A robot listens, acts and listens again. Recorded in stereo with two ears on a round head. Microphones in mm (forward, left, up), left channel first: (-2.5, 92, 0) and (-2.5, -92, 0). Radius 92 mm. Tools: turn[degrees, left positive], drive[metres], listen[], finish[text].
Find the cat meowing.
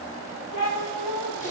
Action: turn[90]
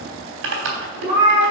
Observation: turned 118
Thought: So it is at 25° right.
Action: turn[-25]
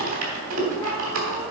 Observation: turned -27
Action: listen[]
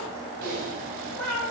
Action: finish[Found it: a cat meowing, straight ahead, over 4 m away.]